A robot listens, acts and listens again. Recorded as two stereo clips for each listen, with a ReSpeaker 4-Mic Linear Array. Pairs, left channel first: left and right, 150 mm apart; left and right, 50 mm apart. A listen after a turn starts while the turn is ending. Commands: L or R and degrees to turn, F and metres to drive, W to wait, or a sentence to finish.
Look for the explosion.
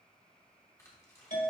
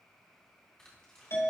W
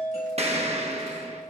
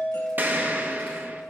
R45
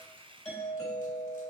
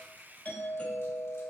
W
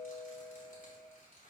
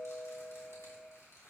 I heard an explosion, but can't make it out now. It was about straight ahead or 90° right.